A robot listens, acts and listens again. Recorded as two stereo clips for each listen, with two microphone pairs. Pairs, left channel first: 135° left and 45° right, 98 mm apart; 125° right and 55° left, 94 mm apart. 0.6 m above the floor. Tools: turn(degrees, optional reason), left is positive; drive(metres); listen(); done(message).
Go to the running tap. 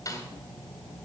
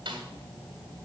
listen()
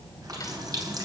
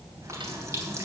drive(metres=1.0)
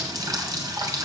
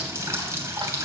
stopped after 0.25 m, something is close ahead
done("Blocked. The running tap is further on, straight ahead.")